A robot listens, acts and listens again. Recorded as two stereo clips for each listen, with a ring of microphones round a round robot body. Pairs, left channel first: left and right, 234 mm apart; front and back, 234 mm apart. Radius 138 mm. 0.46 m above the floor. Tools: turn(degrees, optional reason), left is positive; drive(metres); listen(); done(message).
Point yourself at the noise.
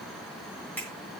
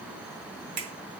turn(degrees=175, reason="The finger snap: 175° left.")
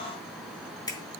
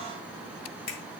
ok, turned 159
turn(degrees=15, reason="The finger snap is now 15° left.")
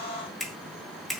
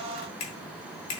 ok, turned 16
done("Facing the finger snap, 2 to 4 m away.")